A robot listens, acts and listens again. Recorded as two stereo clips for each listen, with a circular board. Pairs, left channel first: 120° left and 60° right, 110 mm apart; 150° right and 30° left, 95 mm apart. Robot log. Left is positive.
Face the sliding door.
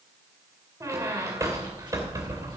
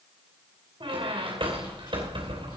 cmd idle
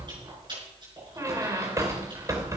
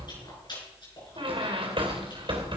cmd idle
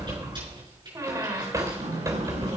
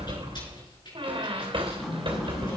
note: The sliding door: 60° right.
cmd yaw -60
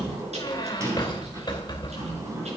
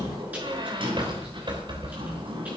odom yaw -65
end: Facing the sliding door, over 4 m away.